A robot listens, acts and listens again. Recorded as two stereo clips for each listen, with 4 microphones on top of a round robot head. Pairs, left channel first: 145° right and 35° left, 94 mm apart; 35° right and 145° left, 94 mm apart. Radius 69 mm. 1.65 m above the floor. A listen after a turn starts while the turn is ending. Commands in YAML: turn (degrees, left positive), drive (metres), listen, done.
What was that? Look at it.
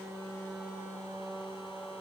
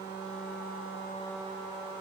listen: true
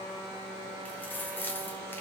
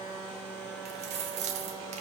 turn: 145
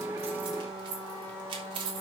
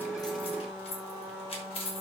done: "Facing the keys jangling."